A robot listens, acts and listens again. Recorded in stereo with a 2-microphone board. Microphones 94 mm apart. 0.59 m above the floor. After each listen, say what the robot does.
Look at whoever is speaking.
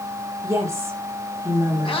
Turn 30° right.
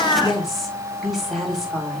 Facing the woman speaking, 2 to 4 m away.